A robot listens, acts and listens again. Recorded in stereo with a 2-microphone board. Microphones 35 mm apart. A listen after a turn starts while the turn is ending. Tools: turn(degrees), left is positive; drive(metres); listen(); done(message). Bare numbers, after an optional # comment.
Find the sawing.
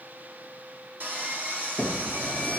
# The sawing: about 55° right or 125° right.
turn(-55)
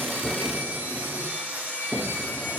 # So it is at 75° right.
turn(-75)
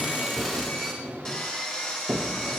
# The sawing is now 15° left.
turn(15)
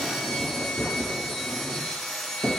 done("Found it: sawing, straight ahead.")